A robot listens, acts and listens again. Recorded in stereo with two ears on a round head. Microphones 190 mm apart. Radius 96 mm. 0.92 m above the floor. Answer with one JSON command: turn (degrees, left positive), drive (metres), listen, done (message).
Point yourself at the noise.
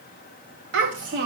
{"turn": -60}
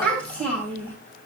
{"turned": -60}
{"turn": 10}
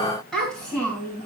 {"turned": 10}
{"done": "Facing the child speaking, over 4 m away."}